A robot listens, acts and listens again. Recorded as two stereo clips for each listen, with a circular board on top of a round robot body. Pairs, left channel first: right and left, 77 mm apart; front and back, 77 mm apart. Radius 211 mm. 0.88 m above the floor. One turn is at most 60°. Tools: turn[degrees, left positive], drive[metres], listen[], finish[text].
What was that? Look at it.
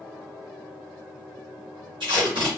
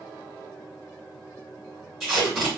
Thought: The tape being pulled: 95° left.
Action: turn[60]
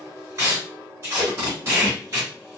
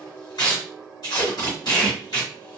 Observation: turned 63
Thought: The tape being pulled is now 35° left.
Action: turn[35]
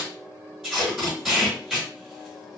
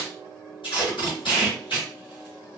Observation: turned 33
Action: finish[Facing the tape being pulled.]